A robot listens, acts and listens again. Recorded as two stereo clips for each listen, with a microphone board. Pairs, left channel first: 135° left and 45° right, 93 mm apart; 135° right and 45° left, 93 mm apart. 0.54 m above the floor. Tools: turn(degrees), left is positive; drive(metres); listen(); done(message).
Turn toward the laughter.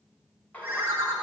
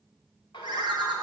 turn(degrees=-160)
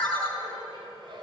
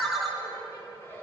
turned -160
turn(degrees=-70)
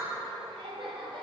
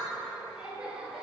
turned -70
turn(degrees=-35)
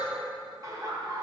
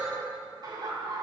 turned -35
done("Found it: laughter, straight ahead.")